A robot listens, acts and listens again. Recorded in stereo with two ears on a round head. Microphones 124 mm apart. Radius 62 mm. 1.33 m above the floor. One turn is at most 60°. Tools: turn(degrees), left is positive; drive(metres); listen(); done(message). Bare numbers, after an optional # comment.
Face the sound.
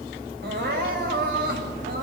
turn(-60)
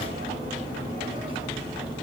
# Nothing new. It was at 30° right.
turn(-30)
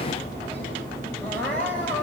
# The crying is now 10° left.
turn(10)
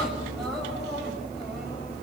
listen()
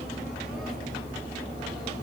listen()
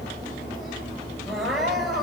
done("Facing the crying, over 4 m away.")